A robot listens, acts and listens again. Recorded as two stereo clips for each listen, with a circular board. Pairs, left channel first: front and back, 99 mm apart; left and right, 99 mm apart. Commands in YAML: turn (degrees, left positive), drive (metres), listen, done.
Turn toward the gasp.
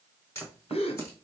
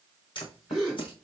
done: "Facing the gasp."